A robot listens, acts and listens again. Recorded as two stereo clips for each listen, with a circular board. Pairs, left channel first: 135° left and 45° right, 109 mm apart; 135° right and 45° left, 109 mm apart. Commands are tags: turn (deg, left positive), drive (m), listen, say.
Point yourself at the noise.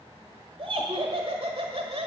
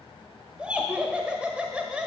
<turn deg="-35"/>
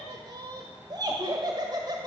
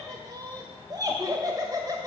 <say>Found it: laughter, straight ahead, 1 to 2 m away.</say>